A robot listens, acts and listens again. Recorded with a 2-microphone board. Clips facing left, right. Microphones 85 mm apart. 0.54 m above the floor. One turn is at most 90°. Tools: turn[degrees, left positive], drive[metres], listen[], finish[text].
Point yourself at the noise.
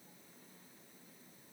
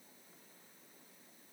Action: listen[]
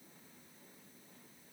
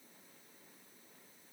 Action: listen[]
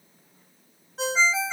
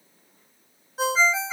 Action: turn[-30]
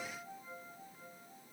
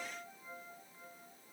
Action: listen[]
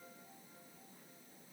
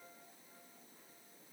Action: listen[]
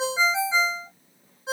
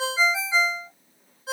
Thought: So it is at 25° left.
Action: turn[25]
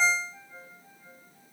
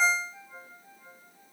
Action: finish[Found it: a ringtone, straight ahead.]